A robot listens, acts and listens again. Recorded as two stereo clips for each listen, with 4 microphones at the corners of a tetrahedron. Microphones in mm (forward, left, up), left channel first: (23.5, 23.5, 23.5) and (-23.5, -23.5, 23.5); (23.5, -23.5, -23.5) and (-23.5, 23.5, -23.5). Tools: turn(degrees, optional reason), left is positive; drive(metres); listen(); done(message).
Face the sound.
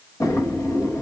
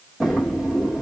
turn(degrees=45, reason="The drawer: 45° left.")
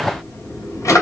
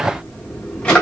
turn(degrees=25, reason="The drawer is now 25° left.")
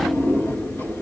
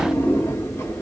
done("Facing the drawer.")